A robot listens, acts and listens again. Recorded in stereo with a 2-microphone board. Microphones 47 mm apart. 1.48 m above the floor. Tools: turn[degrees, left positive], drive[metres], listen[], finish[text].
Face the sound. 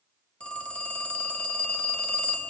Thought: The phone ringing: about 30° left or 150° left.
Action: turn[30]
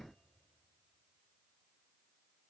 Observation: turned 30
Action: listen[]
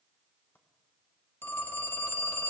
Thought: So it is at 120° left.
Action: turn[120]
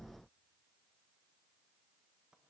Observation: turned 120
Action: listen[]
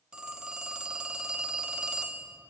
Thought: The phone ringing is now 20° right.
Action: turn[-20]
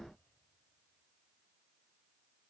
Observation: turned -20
Action: listen[]
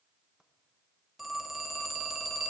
Action: finish[Found it: a phone ringing, straight ahead, under 1 m away.]